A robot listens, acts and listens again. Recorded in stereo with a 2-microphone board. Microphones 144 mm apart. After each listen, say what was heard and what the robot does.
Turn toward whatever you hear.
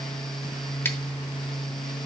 Keep listening.
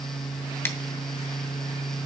The scissors: about 15° left or 165° left. Turn 15° left.
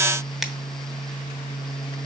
Keep listening.
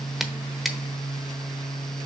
Found it: scissors, straight ahead.